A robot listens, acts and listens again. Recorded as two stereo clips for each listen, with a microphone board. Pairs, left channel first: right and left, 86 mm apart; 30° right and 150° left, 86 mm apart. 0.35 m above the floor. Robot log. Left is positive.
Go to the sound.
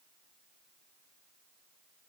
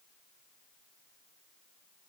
cmd idle
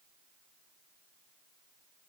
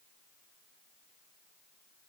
cmd idle
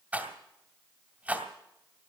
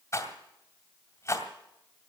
note: The rattle: 20° left.
cmd yaw +20
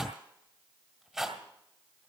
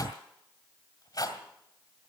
cmd fwd 1.0
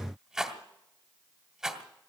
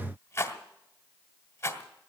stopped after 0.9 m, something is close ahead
note: The rattle is now 10° left.
cmd yaw +10
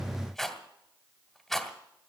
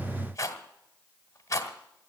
end: I am next to the rattle.